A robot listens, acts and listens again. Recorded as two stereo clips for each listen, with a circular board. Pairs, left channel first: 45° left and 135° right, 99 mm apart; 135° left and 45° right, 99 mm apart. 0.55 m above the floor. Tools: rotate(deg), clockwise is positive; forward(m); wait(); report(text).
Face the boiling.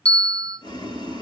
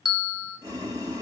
report("Found it: boiling, straight ahead, 2 to 4 m away.")